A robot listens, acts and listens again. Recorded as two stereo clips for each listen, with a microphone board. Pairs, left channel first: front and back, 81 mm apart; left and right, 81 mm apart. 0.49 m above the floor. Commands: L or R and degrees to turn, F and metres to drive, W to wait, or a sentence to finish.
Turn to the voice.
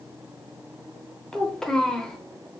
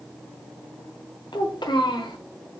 L80
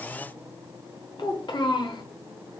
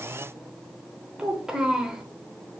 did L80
R10
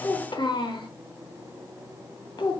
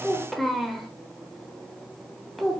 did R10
Facing the child speaking.